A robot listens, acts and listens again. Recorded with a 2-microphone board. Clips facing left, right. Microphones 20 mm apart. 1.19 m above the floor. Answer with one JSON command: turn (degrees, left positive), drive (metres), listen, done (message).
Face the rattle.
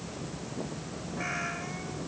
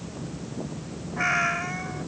{"listen": true}
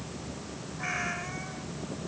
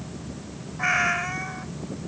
{"listen": true}
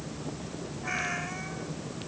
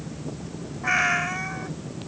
{"done": "I can't make out a rattle to turn to."}